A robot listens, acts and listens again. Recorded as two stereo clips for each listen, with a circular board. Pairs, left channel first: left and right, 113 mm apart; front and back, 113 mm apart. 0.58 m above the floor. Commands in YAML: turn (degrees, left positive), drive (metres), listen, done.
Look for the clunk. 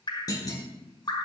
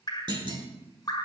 turn: 140
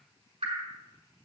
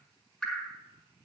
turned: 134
turn: 10
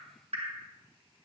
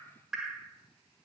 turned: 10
done: "Facing where the clunk came from. I can't hear it now."